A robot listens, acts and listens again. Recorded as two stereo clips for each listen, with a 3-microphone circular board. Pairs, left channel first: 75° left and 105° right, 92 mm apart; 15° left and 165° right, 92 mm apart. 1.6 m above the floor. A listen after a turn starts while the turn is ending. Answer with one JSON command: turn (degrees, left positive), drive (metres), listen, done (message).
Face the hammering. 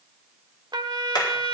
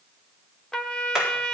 {"turn": 115}
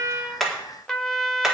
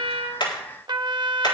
{"listen": true}
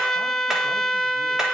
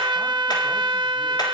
{"listen": true}
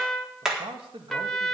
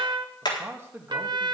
{"turn": -20}
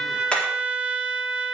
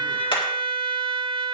{"done": "Facing the hammering."}